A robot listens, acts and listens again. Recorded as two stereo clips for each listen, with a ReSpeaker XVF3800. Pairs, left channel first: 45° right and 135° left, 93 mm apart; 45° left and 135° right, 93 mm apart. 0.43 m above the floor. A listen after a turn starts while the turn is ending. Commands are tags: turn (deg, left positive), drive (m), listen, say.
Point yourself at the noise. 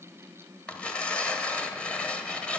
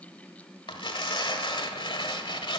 <turn deg="30"/>
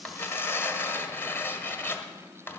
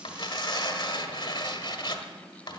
<turn deg="15"/>
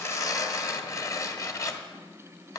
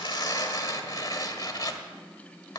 <say>Facing the tearing paper.</say>